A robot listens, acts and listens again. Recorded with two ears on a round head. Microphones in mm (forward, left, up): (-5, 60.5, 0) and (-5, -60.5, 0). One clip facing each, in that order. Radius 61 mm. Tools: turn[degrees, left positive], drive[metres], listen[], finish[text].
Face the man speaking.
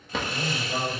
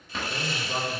Action: turn[-30]
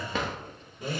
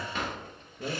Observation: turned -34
Thought: So it is at 120° right.
Action: turn[-120]
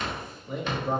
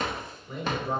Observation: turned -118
Thought: The man speaking is now 25° left.
Action: turn[25]
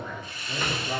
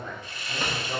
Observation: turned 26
Thought: The man speaking is now 20° left.
Action: turn[20]
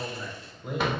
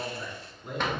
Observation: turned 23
Thought: The man speaking is now 15° left.
Action: turn[15]
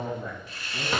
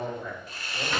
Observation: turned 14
Thought: The man speaking is now 10° left.
Action: turn[10]
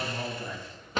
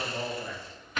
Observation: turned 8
Action: finish[Facing the man speaking.]